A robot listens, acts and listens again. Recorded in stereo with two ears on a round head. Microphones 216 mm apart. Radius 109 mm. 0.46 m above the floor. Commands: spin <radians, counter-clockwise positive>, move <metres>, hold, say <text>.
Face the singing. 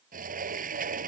hold
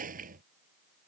hold
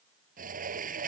say I can't make out singing to turn to.